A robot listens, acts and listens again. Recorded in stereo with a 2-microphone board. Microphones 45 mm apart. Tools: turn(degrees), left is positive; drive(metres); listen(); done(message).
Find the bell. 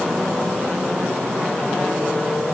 listen()
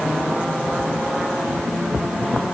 listen()
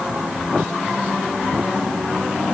done("I can't make out a bell to turn to.")